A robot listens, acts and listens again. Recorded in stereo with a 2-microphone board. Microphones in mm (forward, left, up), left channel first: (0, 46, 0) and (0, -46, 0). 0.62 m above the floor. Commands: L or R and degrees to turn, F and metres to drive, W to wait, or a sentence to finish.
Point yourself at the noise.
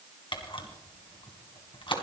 L65
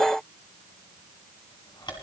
L55
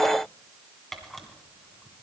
Facing the camera shutter.